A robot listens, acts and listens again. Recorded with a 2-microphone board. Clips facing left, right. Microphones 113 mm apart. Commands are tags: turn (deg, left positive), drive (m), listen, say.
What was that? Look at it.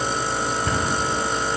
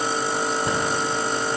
<turn deg="-25"/>
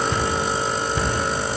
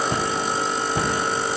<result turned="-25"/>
<turn deg="-130"/>
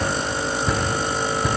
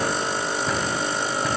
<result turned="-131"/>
<say>Found it: a cupboard door, straight ahead.</say>